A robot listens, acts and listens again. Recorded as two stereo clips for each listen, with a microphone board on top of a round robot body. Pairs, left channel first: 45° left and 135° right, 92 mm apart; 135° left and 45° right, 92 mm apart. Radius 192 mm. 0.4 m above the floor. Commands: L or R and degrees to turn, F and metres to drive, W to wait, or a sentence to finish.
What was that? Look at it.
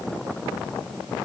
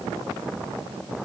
W
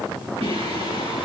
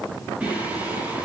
R120
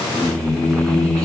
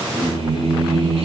R40
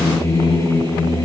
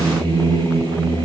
R15
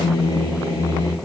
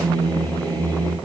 Facing the singing, over 4 m away.